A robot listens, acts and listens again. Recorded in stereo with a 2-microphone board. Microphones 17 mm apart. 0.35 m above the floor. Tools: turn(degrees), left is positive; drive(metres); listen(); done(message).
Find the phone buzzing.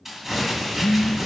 turn(degrees=90)
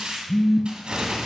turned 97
turn(degrees=-15)
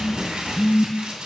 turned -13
done("Found it: a phone buzzing, straight ahead, under 1 m away.")